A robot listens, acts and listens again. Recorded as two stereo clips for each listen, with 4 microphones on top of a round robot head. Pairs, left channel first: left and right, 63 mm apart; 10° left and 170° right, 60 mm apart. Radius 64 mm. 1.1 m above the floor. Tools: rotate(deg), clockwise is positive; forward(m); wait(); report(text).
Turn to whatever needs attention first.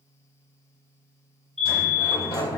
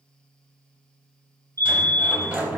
rotate(-175)
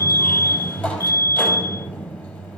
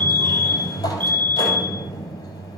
rotate(-65)
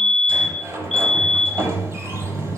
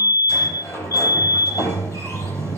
report("Found it: a fire alarm, straight ahead.")